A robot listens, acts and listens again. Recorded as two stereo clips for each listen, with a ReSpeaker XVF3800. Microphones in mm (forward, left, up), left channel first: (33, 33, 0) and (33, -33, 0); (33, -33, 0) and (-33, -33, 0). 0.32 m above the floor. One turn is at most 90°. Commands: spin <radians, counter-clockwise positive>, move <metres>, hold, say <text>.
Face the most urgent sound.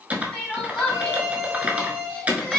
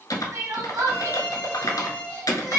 spin 1.57
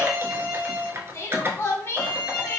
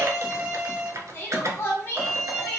spin 0.79
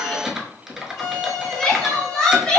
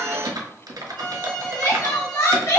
spin 0.26
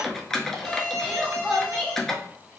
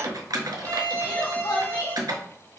say Facing the crying.